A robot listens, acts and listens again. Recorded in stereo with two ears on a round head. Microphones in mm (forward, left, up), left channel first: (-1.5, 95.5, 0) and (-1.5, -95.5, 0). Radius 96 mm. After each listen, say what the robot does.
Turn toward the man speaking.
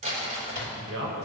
Turn 70° right.
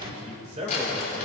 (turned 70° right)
Turn 30° right.
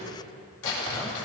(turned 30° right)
Keep listening.
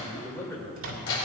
Turn 15° left.
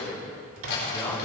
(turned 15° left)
Turn 15° left.
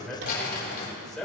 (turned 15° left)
Facing the man speaking, 2 to 4 m away.